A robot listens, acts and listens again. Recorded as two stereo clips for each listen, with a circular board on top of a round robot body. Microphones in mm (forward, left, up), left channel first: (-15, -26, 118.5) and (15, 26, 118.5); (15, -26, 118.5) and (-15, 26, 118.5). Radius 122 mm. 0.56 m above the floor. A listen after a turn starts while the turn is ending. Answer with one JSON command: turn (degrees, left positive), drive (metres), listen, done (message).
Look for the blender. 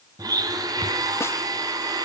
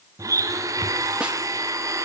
{"turn": 80}
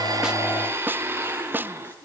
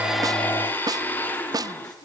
{"done": "Found it: a blender, straight ahead, 2 to 4 m away."}